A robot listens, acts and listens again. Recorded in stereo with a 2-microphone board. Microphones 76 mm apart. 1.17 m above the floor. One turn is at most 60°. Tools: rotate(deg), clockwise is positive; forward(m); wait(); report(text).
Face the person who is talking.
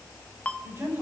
rotate(35)
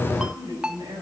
rotate(60)
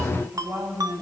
rotate(55)
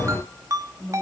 report("Found it: a woman speaking, straight ahead, over 4 m away.")